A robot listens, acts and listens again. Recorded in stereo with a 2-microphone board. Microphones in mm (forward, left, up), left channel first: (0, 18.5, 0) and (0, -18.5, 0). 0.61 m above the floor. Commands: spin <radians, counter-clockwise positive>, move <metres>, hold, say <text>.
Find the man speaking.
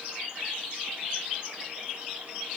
hold
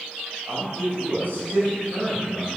spin -1.13
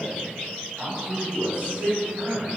spin -1.13
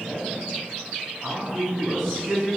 spin 0.17
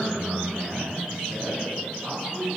say Found it: a man speaking, straight ahead.